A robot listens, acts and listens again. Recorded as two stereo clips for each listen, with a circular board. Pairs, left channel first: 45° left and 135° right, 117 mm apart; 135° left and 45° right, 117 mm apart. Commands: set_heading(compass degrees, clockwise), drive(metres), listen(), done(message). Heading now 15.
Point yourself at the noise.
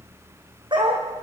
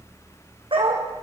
set_heading(100)
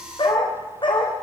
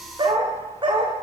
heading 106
done("Found it: a dog barking, straight ahead.")